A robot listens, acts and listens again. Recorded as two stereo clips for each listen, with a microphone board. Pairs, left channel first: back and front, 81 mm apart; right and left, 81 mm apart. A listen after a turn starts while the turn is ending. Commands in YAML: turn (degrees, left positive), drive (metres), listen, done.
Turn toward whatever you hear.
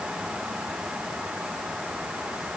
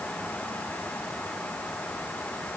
listen: true
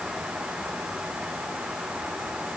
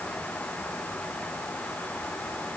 listen: true
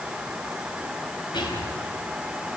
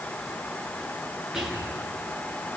turn: 175
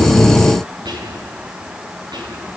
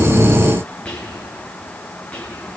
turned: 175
turn: -15
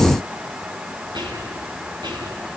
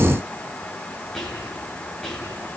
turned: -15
done: "Found it: whispering, straight ahead, over 4 m away."